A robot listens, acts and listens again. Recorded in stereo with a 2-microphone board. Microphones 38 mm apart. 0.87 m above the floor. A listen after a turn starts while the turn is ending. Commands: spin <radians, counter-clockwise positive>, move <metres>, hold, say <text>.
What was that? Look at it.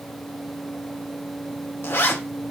spin 1.22
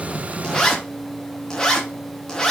spin 0.26
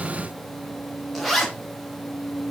say Facing the zipper.